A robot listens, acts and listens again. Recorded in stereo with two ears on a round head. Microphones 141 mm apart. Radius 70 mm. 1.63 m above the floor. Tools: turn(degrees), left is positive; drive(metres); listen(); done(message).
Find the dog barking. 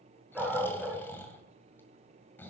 turn(degrees=-30)
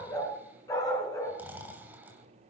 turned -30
turn(degrees=25)
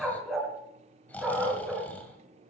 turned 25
done("Facing the dog barking, over 4 m away.")